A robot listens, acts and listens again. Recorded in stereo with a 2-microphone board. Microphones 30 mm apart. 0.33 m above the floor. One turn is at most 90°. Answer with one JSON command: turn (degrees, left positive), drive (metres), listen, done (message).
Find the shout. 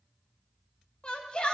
{"turn": 30}
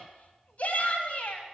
{"turn": 90}
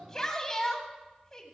{"turn": 20}
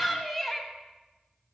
{"done": "Found it: a shout, straight ahead."}